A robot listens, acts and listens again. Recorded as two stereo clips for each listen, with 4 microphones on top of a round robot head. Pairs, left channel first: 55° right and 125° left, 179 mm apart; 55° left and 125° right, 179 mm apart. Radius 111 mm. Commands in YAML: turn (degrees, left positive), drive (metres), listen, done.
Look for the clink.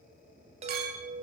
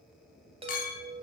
turn: 95
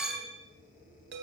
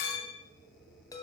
turn: 40
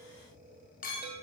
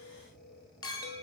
turn: -15
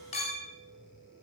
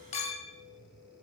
done: "Facing the clink."